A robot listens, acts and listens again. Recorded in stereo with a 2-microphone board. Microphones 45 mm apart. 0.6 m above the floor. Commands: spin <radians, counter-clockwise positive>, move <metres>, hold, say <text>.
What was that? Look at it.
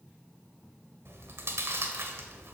spin -1.31
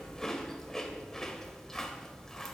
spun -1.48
spin 0.17
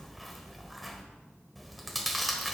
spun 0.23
say Found it: chewing, straight ahead.